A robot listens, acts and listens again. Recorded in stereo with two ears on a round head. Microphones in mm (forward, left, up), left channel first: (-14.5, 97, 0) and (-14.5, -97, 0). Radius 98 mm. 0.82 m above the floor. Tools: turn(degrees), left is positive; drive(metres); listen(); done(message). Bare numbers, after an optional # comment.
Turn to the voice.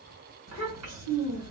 turn(-90)
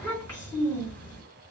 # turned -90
# So it is at 15° left.
turn(15)
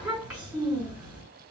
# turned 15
done("Facing the child speaking.")